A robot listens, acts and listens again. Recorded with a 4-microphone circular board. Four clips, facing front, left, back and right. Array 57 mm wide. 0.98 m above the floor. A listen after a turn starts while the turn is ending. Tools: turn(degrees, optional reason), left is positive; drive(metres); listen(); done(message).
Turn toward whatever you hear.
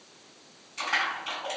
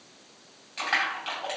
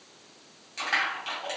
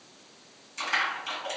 turn(degrees=110, reason="The crushing: 110° left.")
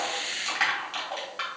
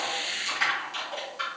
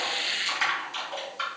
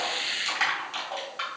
turn(degrees=-20, reason="The crushing is now 20° right.")
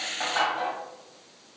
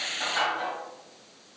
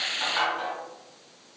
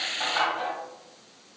turn(degrees=-10, reason="The crushing is now 10° right.")
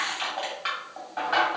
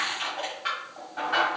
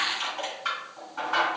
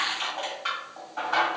done("Found it: crushing, straight ahead.")